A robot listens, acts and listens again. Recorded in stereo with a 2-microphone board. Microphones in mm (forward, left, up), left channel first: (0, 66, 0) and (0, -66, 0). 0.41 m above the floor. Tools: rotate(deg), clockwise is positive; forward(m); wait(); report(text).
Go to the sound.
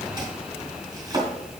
rotate(35)
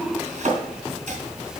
rotate(110)
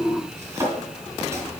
rotate(20)
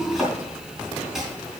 forward(1.0)
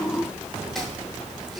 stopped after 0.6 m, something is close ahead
wait()
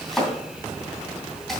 report("Something is in my way. I am facing the chopping but have not reached it.")